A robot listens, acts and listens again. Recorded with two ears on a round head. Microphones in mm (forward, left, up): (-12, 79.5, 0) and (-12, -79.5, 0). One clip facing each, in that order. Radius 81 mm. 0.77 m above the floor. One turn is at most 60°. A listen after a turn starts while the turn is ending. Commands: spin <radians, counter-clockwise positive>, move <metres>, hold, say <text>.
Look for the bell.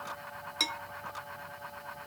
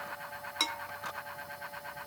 spin 0.52
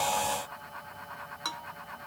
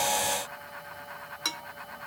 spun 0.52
spin -0.44
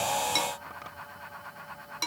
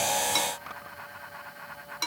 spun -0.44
say Facing the bell.